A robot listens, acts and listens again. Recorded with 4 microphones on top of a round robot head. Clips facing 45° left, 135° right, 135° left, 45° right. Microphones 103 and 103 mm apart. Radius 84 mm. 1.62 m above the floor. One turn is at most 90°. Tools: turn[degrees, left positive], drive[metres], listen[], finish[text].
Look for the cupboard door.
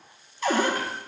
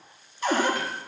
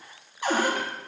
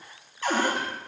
Thought: The cupboard door: 60° left.
Action: turn[60]
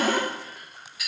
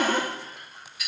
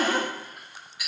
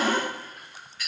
Thought: The cupboard door is now 20° left.
Action: turn[20]
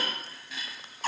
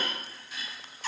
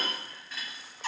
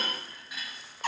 Action: finish[Facing the cupboard door.]